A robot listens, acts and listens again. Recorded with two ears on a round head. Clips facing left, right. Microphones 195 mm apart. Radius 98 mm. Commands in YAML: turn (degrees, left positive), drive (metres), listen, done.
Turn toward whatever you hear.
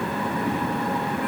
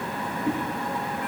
listen: true
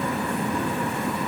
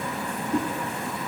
turn: -25
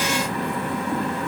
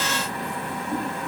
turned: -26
done: "Found it: a whoosh, straight ahead."